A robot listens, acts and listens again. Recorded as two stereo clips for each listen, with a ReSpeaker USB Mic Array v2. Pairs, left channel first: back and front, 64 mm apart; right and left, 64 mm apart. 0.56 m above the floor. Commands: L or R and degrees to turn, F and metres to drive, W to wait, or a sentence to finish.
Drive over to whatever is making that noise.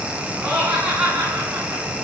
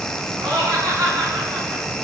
L75
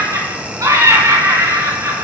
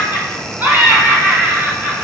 L30
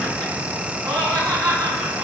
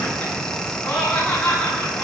R15
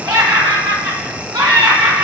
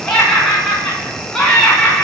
F1.0
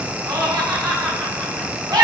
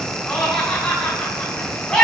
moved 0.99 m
R10
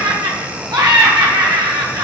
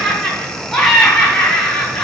F1.0
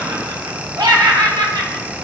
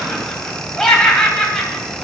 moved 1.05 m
F1.0
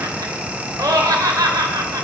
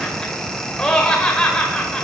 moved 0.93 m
R10
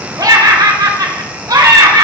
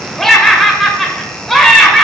F1.0
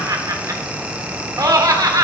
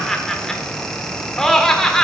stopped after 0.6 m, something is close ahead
Arrived at the laughter, straight ahead.